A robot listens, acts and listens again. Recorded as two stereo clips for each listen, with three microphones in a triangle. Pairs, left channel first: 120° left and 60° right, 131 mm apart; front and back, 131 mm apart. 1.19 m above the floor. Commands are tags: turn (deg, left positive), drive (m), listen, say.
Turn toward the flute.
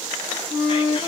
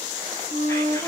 <turn deg="30"/>
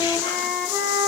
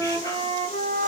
<turn deg="25"/>
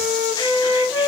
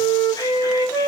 <turn deg="25"/>
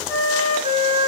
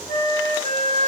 <turn deg="-10"/>
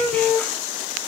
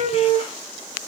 <say>Found it: a flute, straight ahead, 1 to 2 m away.</say>